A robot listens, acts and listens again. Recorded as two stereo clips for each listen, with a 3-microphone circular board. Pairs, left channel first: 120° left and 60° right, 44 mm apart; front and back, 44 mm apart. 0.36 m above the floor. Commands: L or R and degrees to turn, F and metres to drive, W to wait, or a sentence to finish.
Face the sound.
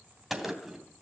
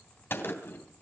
L20
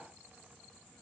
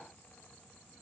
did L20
Facing where the gunshot came from. I can't hear it now.